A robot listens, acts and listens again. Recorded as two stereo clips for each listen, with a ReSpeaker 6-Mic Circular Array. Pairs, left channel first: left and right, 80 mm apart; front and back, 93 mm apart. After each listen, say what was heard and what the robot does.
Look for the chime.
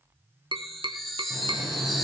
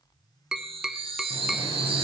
The chime: straight behind. Turn 180° left.
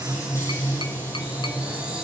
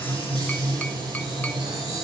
Keep listening.
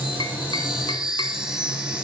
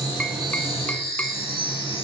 The chime is now 10° right. Turn 10° right.
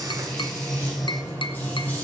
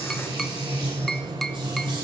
Keep listening.
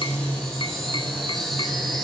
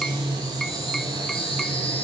Facing the chime.